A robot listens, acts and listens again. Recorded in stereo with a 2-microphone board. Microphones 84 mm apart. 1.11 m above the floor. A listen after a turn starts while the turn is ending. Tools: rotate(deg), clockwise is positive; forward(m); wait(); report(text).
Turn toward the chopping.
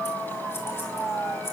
wait()
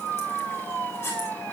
wait()
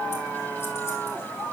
report("I can't make out chopping.")